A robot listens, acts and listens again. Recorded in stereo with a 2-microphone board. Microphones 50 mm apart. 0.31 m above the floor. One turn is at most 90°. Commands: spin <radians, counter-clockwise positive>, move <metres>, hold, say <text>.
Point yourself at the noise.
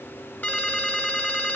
spin 0.61
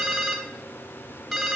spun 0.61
say Facing the ringtone, 1 to 2 m away.